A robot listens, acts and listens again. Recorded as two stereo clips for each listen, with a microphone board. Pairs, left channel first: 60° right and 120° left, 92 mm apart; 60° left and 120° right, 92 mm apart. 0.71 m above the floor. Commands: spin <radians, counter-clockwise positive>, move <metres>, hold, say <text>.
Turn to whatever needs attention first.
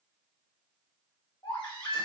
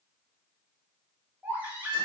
spin -0.87
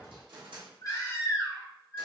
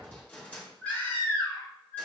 spin -0.26
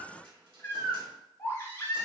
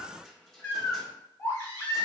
say Facing the baby crying, 1 to 2 m away.